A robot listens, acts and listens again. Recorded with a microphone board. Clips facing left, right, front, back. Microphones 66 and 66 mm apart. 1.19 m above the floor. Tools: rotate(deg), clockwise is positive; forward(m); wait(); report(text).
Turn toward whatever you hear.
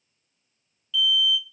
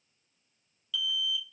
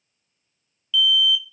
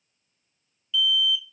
rotate(115)
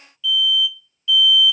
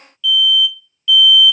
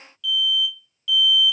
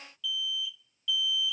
rotate(-25)
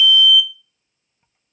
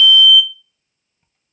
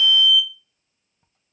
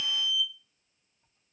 report("Found it: an alarm, straight ahead.")